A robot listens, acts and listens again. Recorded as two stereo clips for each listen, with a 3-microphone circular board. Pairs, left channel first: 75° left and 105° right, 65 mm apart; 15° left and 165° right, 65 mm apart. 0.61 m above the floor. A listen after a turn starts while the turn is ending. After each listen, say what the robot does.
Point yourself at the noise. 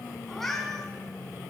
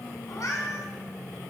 Turn 10° right.
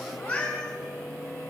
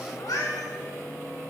Facing the cat meowing.